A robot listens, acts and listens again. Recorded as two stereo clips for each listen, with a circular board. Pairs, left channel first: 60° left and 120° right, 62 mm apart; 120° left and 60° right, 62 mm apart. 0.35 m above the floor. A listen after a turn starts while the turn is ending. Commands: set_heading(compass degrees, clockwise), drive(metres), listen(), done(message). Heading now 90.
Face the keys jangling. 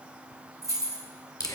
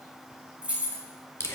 set_heading(210)
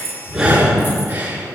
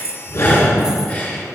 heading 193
set_heading(213)
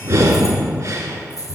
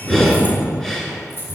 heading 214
set_heading(144)
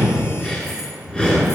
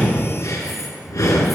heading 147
listen()
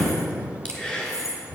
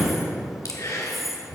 set_heading(122)
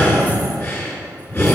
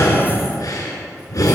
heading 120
listen()
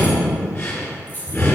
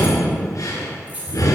done("Facing the keys jangling, 2 to 4 m away.")